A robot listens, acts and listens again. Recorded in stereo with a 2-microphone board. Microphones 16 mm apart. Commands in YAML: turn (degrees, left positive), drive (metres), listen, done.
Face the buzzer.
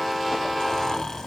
listen: true
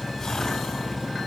listen: true
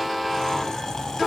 done: "I can't make out a buzzer to turn to."